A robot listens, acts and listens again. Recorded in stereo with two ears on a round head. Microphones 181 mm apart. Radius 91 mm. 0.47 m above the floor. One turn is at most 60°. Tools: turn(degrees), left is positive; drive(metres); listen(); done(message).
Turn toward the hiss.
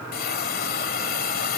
turn(degrees=50)
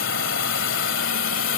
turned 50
turn(degrees=60)
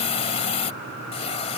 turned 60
turn(degrees=35)
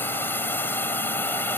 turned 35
turn(degrees=10)
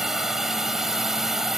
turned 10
done("Facing the hiss.")